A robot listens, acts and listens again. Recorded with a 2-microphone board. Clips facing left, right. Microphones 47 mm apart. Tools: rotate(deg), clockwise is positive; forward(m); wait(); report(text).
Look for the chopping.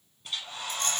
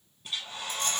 wait()
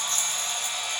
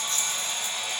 wait()
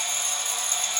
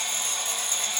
report("I can't make out chopping, only a hair dryer and a rattle.")